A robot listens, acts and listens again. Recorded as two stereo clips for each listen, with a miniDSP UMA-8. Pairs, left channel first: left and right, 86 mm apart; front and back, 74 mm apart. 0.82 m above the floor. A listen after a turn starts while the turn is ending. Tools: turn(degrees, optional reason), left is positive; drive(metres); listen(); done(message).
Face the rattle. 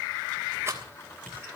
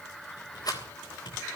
turn(degrees=-30, reason="The rattle: 30° right.")
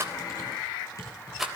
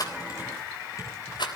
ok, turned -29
done("Found it: a rattle, straight ahead.")